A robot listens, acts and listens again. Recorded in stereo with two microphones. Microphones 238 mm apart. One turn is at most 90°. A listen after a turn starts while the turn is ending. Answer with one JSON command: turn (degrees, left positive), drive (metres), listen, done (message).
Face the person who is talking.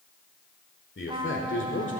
{"turn": 55}
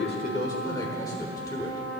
{"turn": 15}
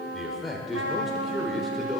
{"done": "Facing the man speaking."}